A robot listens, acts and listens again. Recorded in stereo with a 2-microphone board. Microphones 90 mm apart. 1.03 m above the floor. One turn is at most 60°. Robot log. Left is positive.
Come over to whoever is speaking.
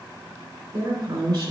note: The woman speaking: about 55° right or 125° right.
cmd yaw -55
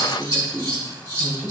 cmd fwd 1.0
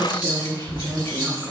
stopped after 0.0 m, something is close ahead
end: Something is in my way. I am facing the woman speaking but have not reached it.